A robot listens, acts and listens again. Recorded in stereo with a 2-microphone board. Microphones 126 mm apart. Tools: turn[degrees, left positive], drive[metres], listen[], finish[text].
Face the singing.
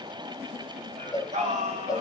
Thought: The singing: about 60° right or 120° right.
Action: turn[-60]
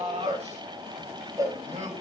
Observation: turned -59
Thought: So it is at 60° right.
Action: turn[-60]
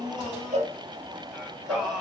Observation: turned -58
Action: finish[Facing the singing.]